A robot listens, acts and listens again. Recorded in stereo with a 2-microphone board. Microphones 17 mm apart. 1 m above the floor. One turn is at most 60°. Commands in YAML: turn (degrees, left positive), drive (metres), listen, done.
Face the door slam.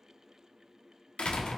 turn: 60
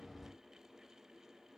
turn: 30
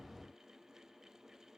done: "Facing where the door slam came from. I can't hear it now."